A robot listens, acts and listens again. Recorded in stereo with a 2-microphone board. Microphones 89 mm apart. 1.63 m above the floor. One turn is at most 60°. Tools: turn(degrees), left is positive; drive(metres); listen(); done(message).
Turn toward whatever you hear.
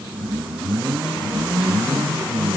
listen()
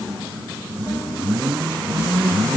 listen()
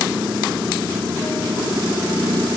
done("I can't make out anything to turn to.")